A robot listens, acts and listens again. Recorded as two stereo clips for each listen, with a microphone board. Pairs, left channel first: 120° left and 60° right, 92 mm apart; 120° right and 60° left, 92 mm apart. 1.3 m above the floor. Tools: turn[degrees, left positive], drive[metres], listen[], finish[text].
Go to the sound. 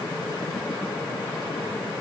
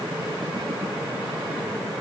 Action: listen[]
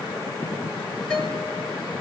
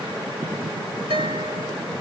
Thought: The guitar: 40° left.
Action: turn[40]
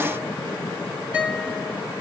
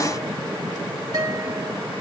Thought: The guitar is now 10° left.
Action: turn[10]
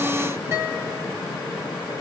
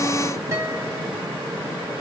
Action: drive[1.0]
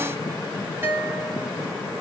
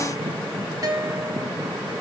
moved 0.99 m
Thought: The guitar is now 10° left.
Action: turn[10]
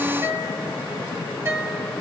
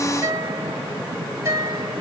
Action: drive[1.0]
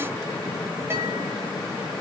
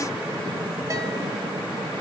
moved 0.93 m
Action: listen[]
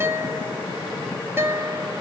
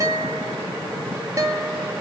Action: drive[1.0]
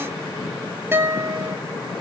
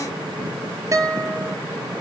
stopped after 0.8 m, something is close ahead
Action: finish[I am next to the guitar.]